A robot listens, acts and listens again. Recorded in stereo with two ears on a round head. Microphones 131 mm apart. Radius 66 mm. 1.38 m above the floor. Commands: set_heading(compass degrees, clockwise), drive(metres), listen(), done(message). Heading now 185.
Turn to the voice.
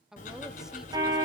set_heading(215)
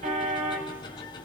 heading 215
listen()
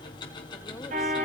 listen()
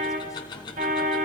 done("I heard a woman speaking, but can't make it out now. It was about 25° left or 145° right.")